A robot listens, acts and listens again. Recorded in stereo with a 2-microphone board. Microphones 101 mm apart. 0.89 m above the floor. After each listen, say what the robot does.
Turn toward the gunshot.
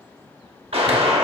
Turn 70° right.
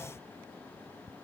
Keep listening.
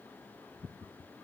I heard a gunshot, but can't make it out now. It was about straight ahead or 40° right.